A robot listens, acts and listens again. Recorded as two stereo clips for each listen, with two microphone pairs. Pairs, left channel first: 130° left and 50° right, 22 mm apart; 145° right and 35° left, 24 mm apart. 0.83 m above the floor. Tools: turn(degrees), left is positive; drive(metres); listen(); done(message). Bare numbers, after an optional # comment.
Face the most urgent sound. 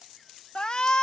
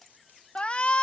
# The shout: 175° right.
turn(-175)
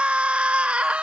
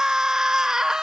# The shout is now 30° right.
turn(-30)
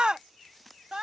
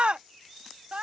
done("Facing the shout.")